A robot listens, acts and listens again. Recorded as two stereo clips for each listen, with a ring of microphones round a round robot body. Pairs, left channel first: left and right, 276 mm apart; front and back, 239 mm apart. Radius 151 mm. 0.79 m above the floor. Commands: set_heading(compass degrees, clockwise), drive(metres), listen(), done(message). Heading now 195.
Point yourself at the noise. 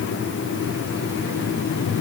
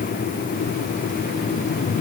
listen()
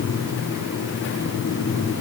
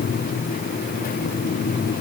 listen()
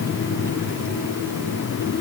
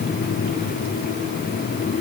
done("I can't make out anything to turn to.")